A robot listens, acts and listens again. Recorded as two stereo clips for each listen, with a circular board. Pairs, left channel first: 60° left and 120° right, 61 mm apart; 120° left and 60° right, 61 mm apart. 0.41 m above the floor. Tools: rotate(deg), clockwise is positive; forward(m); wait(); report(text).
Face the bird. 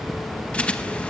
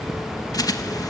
rotate(-130)
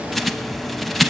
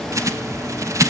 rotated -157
rotate(30)
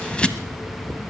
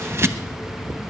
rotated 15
rotate(15)
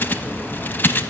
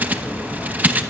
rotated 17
report("Found it: a bird, straight ahead.")